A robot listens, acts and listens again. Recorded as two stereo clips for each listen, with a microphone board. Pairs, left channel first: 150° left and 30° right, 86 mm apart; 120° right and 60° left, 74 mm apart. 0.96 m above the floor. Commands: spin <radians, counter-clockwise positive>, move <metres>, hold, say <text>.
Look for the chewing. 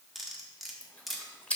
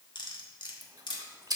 spin 1.31
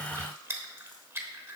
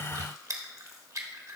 spin 0.52
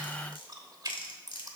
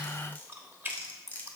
say Facing the chewing.